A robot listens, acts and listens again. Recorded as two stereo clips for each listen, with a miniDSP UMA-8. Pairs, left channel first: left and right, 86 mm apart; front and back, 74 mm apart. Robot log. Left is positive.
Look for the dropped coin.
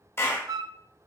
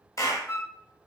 cmd idle
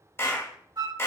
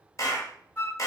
cmd idle
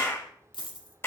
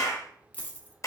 note: The dropped coin: 65° left.
cmd yaw +65
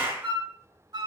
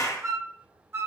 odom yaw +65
end: Facing where the dropped coin came from. I can't hear it now.